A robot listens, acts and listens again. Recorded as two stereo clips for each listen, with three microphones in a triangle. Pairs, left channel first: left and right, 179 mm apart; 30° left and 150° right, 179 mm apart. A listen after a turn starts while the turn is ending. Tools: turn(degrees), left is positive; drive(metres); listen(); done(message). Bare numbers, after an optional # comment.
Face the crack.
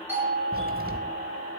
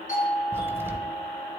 # The crack: 75° right.
turn(-75)
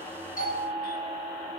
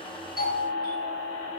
done("Facing where the crack came from. I can't hear it now.")